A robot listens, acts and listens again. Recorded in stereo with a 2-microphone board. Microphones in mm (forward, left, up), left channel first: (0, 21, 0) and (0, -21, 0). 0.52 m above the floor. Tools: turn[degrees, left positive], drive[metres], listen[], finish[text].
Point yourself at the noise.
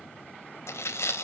Action: turn[90]
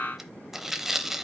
Thought: So it is at 10° right.
Action: turn[-10]
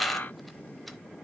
Action: finish[Found it: tearing paper, straight ahead.]